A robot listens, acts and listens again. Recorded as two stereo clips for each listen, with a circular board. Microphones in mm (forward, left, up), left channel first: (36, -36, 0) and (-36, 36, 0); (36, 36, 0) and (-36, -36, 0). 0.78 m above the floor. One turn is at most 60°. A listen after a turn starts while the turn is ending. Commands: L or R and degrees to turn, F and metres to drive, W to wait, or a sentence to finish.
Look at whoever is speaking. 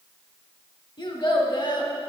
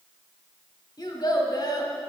Found it: a child speaking, straight ahead.